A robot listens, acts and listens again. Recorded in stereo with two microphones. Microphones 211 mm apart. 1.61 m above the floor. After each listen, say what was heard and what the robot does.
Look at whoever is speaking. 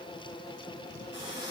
Keep listening.
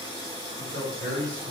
The man speaking: about 70° right or 110° right. Turn 70° right.
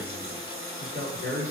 So it is at 40° right. Turn 40° right.
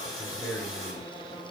Found it: a man speaking, straight ahead.